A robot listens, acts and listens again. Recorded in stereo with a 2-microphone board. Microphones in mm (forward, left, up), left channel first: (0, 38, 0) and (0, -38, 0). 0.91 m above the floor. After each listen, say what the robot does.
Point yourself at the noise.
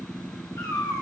Turn 60° left.
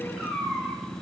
Turn 10° right.
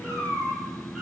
Turn 15° right.
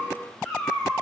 Turn 10° right.
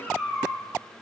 Turn 10° right.
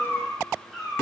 Turn 15° right.
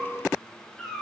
Found it: a cat meowing, straight ahead, 2 to 4 m away.